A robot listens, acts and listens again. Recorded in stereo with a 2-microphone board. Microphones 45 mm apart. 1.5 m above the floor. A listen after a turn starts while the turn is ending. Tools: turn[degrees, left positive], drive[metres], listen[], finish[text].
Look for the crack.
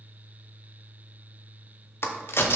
Thought: The crack: about 65° left or 115° left.
Action: turn[65]
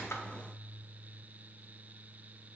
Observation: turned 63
Action: listen[]
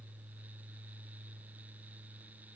Action: finish[I heard a crack, but can't make it out now. It was about straight ahead or 55° left.]